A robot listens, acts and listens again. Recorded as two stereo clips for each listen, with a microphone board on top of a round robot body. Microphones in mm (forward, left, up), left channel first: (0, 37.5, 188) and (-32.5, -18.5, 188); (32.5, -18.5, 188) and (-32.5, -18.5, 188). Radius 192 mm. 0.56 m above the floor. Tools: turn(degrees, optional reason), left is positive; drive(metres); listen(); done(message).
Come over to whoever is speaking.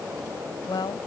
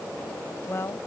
turn(degrees=50, reason="The woman speaking: 50° left.")
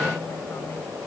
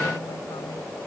listen()
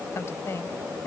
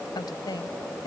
turn(degrees=10, reason="The woman speaking is now 10° left.")
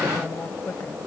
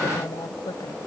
drive(metres=1.0)
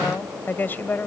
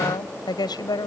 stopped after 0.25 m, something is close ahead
done("Something is in my way. I am facing the woman speaking but have not reached it.")